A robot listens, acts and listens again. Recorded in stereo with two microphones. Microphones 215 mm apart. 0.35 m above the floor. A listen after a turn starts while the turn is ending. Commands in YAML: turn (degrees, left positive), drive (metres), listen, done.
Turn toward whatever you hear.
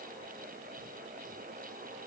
listen: true
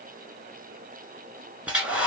turn: -30
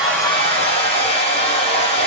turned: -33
turn: 25
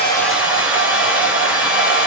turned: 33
done: "Found it: a hair dryer, straight ahead, 1 to 2 m away."